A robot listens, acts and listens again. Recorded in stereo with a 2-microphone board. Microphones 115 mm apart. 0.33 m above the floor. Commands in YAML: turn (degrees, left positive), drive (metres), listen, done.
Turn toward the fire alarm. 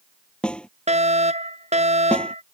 turn: -75
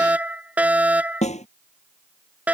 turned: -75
turn: -15
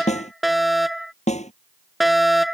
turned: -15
done: "Found it: a fire alarm, straight ahead."